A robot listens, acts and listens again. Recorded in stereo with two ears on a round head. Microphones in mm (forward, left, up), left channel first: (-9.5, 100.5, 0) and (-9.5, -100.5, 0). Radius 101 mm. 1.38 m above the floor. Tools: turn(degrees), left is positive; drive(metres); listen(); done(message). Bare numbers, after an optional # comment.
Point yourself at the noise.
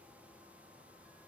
listen()
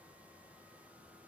listen()
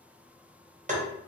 # The tapping: about 35° right or 145° right.
turn(-35)
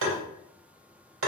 # So it is at 115° right.
turn(-115)
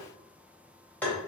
done("Found it: tapping, straight ahead, 1 to 2 m away.")